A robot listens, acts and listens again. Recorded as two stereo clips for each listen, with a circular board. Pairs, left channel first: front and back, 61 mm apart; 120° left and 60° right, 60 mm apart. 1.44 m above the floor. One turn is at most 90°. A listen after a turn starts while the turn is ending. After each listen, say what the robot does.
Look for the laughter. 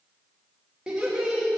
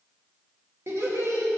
Turn 90° right.
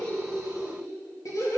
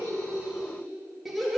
Turn 30° left.
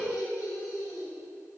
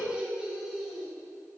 Turn 25° left.
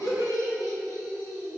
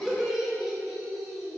Turn 30° left.
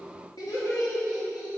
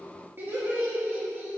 Found it: laughter, straight ahead, 2 to 4 m away.